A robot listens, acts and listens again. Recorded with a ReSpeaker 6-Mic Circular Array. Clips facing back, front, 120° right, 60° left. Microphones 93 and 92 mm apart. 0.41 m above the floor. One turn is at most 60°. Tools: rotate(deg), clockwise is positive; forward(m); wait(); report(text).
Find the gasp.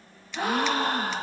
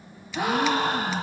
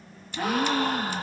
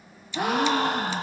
rotate(-60)
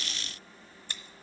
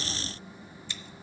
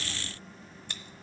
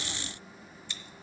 rotate(-15)
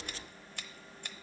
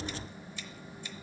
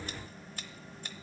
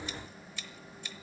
report("I heard a gasp from this way, but can't make it out now.")